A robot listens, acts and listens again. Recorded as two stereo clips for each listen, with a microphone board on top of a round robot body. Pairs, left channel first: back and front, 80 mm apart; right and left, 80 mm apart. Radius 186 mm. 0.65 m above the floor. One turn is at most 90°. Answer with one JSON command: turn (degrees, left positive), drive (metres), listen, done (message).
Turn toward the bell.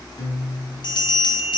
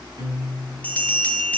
{"turn": -90}
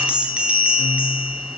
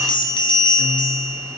{"turn": -75}
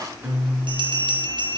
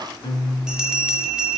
{"turn": 10}
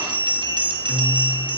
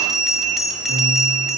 {"done": "Facing the bell, 2 to 4 m away."}